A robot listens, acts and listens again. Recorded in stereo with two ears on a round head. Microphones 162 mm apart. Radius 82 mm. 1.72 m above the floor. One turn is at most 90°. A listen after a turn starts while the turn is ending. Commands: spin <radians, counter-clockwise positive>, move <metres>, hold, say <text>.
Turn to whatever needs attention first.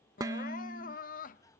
spin 0.79
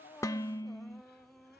say Facing the crying.